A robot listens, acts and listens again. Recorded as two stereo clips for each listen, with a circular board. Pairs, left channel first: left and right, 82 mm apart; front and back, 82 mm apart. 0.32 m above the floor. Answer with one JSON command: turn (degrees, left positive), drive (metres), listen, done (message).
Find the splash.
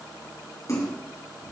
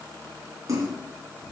{"turn": 140}
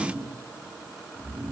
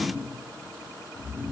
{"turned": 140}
{"done": "Facing where the splash came from. I can't hear it now."}